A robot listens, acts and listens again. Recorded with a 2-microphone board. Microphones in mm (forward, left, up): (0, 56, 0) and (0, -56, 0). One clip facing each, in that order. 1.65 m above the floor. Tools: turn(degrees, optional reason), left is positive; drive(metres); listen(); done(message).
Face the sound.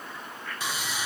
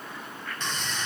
turn(degrees=30)
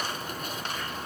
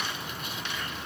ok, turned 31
turn(degrees=140, reason="So it is at 140° left.")
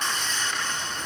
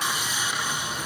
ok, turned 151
turn(degrees=-10, reason="The sawing is now 10° right.")
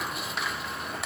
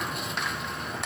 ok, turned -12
done("Facing the sawing.")